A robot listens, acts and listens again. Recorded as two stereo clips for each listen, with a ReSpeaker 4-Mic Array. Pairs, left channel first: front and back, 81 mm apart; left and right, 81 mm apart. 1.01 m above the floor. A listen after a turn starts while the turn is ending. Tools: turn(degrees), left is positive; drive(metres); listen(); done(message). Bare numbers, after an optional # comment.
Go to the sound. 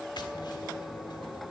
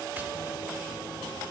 listen()
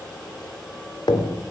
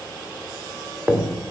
# The tapping: 20° right.
turn(-20)
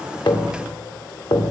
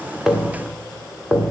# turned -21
drive(1.0)
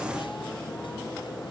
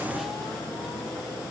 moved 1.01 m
listen()
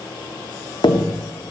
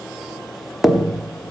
drive(1.0)
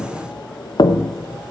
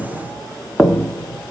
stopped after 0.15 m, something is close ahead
done("Arrived at the tapping, straight ahead.")